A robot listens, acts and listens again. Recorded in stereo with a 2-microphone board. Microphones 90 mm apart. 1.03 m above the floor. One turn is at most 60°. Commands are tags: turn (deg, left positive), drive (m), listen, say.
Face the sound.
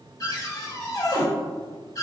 <turn deg="45"/>
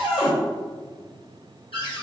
<turn deg="60"/>
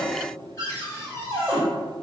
<turn deg="30"/>
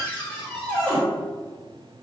<say>Facing the cupboard door, 1 to 2 m away.</say>